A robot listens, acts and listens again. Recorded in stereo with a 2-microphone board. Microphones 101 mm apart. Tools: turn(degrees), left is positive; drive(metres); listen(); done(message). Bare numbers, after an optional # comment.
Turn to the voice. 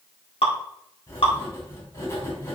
listen()
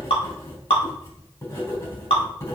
listen()
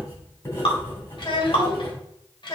# The child speaking: about 50° left or 130° left.
turn(50)
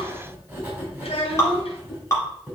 # So it is at 80° left.
turn(80)
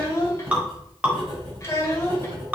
# The child speaking is now 30° left.
turn(30)
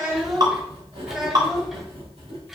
done("Found it: a child speaking, straight ahead, 2 to 4 m away.")